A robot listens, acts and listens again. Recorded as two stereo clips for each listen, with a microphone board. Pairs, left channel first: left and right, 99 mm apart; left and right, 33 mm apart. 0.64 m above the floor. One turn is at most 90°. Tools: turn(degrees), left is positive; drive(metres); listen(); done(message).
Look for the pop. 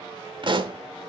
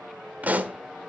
turn(degrees=-55)
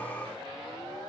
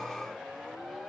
listen()
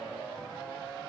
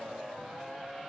done("I heard a pop, but can't make it out now. It was about straight ahead or 70° right.")